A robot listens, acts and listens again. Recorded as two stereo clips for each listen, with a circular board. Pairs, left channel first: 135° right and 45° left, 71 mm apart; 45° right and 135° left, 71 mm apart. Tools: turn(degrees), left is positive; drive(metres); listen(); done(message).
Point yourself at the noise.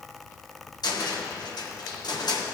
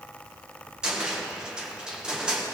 turn(degrees=-145)
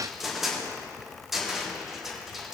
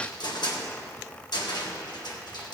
turn(degrees=-45)
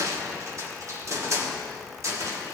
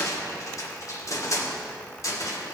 done("Found it: a cupboard door, straight ahead, 1 to 2 m away.")